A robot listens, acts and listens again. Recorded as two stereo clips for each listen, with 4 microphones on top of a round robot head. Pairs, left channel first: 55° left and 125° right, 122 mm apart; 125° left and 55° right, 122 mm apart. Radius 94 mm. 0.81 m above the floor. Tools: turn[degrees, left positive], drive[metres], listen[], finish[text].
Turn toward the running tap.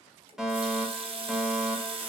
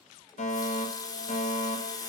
Thought: The running tap: 170° right.
Action: turn[-170]
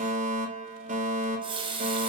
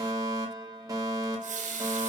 Thought: The running tap is now 75° right.
Action: turn[-75]
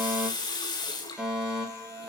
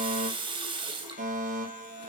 Action: finish[Facing the running tap.]